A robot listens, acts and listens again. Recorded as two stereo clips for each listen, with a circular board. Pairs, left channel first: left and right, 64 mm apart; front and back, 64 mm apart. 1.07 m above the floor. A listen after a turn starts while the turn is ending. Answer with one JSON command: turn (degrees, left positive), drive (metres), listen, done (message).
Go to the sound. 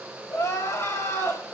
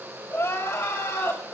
{"turn": 50}
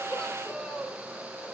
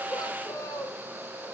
{"turn": 10}
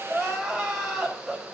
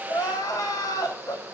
{"drive": 1.0}
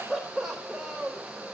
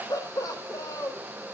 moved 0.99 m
{"drive": 1.0}
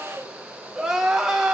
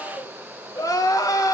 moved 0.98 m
{"drive": 1.0}
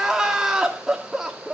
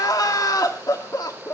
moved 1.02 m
{"turn": -10}
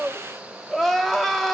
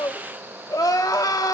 {"drive": 1.0}
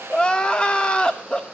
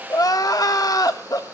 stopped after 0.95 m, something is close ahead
{"turn": 15}
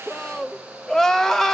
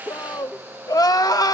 {"done": "I am next to the crying."}